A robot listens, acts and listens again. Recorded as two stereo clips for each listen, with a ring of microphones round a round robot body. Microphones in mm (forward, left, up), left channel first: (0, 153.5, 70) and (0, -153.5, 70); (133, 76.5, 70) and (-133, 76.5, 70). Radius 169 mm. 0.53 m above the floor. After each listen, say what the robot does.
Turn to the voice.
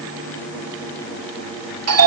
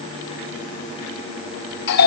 Keep listening.
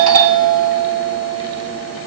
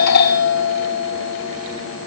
Keep listening.
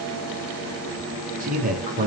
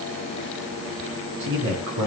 Turn 155° right.
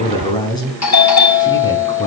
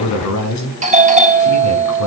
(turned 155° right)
Turn 15° left.
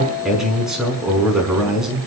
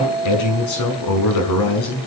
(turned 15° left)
Facing the man speaking.